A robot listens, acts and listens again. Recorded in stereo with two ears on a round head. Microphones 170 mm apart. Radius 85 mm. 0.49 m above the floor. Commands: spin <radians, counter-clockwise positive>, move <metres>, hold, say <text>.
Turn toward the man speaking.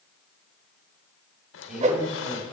spin -0.52
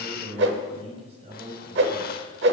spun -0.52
spin -2.53
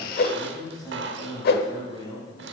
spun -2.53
spin 0.35
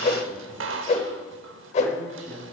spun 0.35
say Found it: a man speaking, straight ahead, over 4 m away.